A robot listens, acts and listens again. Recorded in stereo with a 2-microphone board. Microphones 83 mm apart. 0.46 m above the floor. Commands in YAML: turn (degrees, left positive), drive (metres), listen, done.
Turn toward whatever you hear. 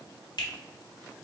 turn: 55
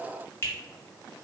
turn: 35
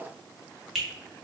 done: "Facing the finger snap."